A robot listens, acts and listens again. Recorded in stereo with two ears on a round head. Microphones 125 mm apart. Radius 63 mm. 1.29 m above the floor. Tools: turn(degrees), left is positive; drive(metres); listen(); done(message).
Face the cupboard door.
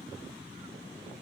listen()
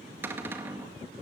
turn(degrees=-15)
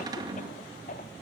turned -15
turn(degrees=-150)
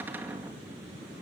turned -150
turn(degrees=-15)
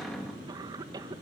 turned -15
done("Facing the cupboard door.")